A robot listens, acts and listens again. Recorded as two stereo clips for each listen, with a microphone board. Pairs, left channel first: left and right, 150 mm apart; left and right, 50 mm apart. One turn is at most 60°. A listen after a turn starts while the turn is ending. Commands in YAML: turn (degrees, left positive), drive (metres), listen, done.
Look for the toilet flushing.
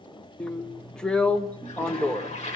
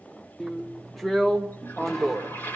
turn: 50
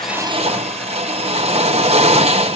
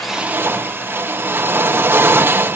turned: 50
listen: true
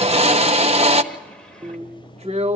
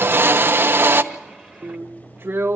listen: true
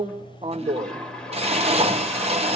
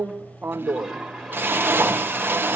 done: "I heard a toilet flushing, but can't make it out now. It was about straight ahead or 80° left."